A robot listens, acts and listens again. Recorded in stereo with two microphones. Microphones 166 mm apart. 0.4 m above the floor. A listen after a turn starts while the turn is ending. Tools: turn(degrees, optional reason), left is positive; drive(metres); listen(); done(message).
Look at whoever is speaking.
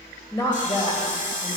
turn(degrees=30, reason="The woman speaking: about 30° left or 150° left.")
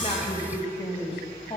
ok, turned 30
turn(degrees=35, reason="The woman speaking: about 35° left or 145° left.")
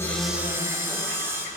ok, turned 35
listen()
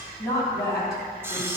turn(degrees=20, reason="So it is at 20° left.")
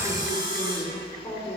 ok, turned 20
turn(degrees=15, reason="The woman speaking is now 15° left.")
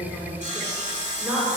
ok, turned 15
done("Found it: a woman speaking, straight ahead, 2 to 4 m away.")